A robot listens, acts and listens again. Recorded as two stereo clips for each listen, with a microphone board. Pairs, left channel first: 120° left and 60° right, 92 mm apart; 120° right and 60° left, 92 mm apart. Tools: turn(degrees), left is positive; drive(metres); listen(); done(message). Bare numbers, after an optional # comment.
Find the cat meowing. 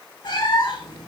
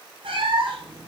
# The cat meowing: 85° left.
turn(85)
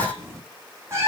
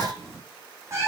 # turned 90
done("Found it: a cat meowing, straight ahead.")